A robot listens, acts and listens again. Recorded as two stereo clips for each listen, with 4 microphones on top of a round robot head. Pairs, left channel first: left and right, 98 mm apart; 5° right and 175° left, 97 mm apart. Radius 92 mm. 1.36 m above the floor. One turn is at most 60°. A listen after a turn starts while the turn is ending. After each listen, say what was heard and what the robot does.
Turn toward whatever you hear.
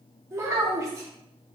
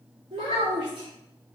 The child speaking: 140° right. Turn 60° right.
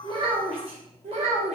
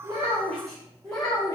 The child speaking is now 80° right. Turn 60° right.
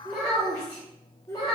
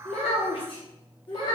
The child speaking is now 30° left. Turn 30° left.
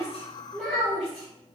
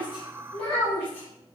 The child speaking is now 10° left. Turn 10° left.
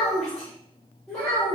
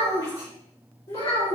Found it: a child speaking, straight ahead, 1 to 2 m away.